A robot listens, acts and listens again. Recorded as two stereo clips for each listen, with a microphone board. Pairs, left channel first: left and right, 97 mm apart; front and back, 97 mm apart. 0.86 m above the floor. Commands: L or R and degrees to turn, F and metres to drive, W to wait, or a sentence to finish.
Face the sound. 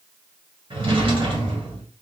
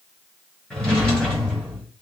R85
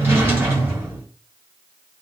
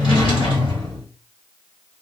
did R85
R25
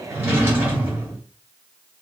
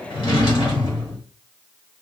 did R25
R25
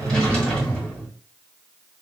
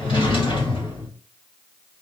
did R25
L10
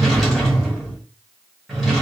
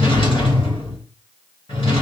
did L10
Facing the drawer, 1 to 2 m away.